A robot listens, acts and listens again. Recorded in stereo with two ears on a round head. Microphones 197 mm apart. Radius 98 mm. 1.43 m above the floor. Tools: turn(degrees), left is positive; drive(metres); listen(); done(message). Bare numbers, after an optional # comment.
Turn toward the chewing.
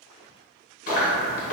# The chewing: about 40° left or 140° left.
turn(40)
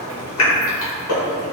# So it is at 100° left.
turn(100)
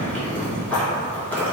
# The chewing is now 10° left.
turn(10)
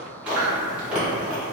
done("Found it: chewing, straight ahead, 1 to 2 m away.")